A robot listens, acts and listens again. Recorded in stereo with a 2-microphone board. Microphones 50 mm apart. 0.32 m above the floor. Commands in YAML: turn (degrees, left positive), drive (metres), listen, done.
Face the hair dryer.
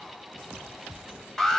listen: true
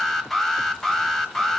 listen: true
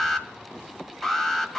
done: "I can't make out a hair dryer, only an alarm."